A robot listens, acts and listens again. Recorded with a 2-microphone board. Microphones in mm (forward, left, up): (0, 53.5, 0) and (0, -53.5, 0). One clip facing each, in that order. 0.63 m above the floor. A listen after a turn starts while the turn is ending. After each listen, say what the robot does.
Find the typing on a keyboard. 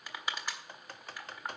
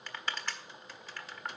Turn 50° left.
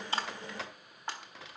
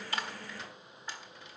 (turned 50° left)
Turn 85° left.
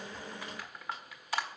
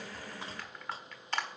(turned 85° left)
Keep listening.
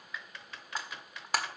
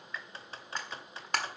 Turn 30° right.
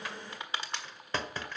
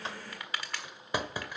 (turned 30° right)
Turn 10° right.
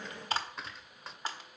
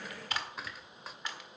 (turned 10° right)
Facing the typing on a keyboard.